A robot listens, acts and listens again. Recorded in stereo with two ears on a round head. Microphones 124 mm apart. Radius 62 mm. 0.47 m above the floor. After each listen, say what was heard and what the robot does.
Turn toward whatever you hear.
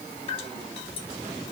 The dripping: about 45° left or 135° left. Turn 45° left.
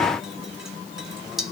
Found it: dripping, straight ahead.